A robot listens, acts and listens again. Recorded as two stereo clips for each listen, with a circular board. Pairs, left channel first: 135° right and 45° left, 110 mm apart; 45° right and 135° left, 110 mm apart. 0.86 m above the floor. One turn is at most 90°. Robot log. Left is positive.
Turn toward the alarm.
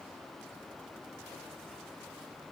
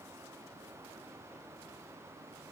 cmd idle
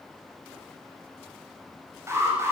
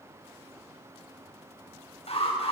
note: The alarm: 20° right.
cmd yaw -20
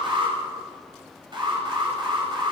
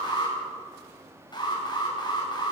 end: Facing the alarm.